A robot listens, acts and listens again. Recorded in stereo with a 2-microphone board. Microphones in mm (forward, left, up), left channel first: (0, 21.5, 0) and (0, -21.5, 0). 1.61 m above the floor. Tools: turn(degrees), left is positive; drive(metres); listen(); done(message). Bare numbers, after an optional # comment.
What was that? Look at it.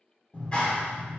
# The clap: about 25° left or 155° left.
turn(25)
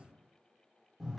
done("Found it: a clap, straight ahead, 1 to 2 m away.")